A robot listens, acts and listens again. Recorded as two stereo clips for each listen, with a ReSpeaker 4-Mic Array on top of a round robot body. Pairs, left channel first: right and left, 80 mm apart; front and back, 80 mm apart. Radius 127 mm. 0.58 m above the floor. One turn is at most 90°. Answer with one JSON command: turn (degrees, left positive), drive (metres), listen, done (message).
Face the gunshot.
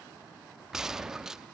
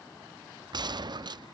{"turn": 90}
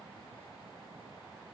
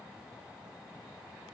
{"turn": 85}
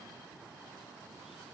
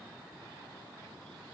{"done": "Facing where the gunshot came from. I can't hear it now."}